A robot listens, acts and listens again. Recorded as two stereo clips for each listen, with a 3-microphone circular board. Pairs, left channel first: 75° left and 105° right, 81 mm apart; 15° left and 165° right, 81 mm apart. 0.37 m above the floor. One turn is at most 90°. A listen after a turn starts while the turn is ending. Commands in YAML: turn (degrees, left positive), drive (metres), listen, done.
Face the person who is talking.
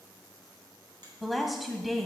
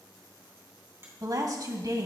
turn: 90
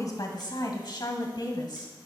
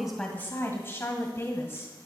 turn: 75
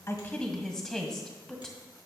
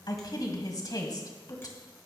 done: "Facing the woman speaking."